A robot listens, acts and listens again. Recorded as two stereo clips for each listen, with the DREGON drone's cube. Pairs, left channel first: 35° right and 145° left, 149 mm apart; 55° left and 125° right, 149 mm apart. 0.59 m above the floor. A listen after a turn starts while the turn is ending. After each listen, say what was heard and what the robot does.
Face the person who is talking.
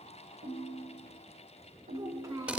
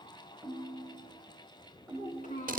The child speaking: 80° left. Turn 80° left.
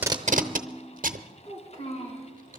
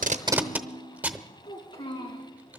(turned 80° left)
Found it: a child speaking, straight ahead, 2 to 4 m away.